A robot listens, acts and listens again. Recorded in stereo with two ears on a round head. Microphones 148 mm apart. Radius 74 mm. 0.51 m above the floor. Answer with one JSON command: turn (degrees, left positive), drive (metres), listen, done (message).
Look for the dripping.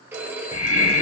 {"listen": true}
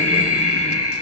{"listen": true}
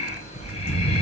{"done": "I can't make out dripping, only breathing and a phone ringing."}